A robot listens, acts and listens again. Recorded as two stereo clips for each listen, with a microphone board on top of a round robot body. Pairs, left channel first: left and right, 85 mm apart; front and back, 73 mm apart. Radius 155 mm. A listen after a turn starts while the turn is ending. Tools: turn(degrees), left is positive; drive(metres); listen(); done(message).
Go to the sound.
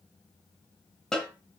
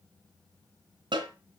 turn(degrees=175)
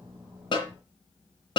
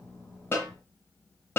turn(degrees=60)
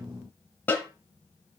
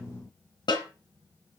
turn(degrees=20)
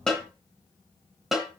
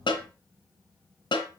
drive(metres=1.0)
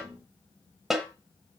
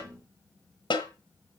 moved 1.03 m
drive(metres=1.0)
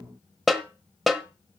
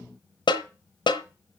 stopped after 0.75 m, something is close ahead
done("I am next to the snare drum.")